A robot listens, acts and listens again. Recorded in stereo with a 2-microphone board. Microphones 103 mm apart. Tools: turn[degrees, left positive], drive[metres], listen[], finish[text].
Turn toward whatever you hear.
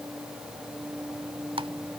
Thought: The typing on a keyboard: about 65° right or 115° right.
Action: turn[-65]
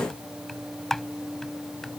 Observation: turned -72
Action: finish[Facing the typing on a keyboard.]